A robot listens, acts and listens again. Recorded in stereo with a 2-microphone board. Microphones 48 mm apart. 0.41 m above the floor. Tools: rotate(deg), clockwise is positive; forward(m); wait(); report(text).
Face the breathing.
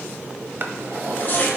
wait()
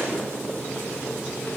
wait()
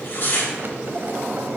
report("I can't make out breathing, only a drawer and tearing paper.")